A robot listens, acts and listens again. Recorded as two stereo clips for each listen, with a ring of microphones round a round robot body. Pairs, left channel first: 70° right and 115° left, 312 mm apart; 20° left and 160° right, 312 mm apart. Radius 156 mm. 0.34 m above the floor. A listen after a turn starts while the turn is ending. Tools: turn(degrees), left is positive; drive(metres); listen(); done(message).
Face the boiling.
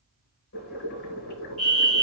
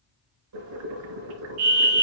turn(degrees=-125)
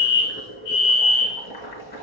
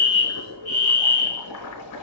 done("Facing the boiling.")